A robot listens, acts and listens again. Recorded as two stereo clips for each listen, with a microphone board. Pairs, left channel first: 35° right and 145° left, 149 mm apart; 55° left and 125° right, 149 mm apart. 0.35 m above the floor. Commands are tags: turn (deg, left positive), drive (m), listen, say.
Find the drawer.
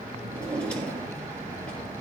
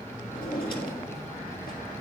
<turn deg="50"/>
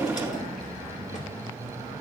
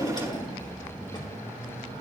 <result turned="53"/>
<say>Found it: a drawer, straight ahead, 2 to 4 m away.</say>